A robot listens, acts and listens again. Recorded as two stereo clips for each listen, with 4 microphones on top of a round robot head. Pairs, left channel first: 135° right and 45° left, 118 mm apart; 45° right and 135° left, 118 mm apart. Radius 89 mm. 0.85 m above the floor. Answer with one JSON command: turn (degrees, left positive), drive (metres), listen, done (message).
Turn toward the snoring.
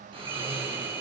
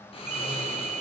{"done": "Found it: snoring, straight ahead."}